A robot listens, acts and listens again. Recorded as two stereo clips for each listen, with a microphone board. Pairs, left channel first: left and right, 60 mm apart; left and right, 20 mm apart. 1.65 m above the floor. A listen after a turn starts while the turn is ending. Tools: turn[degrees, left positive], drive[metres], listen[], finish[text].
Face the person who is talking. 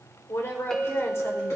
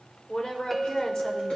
Thought: The woman speaking: about 45° left or 135° left.
Action: turn[45]
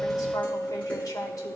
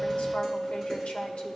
Action: listen[]
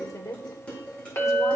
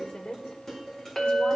Thought: So it is at 85° left.
Action: turn[85]
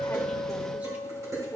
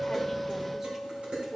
Thought: The woman speaking is now 25° right.
Action: turn[-25]
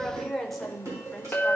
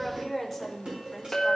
Action: finish[Facing the woman speaking, 1 to 2 m away.]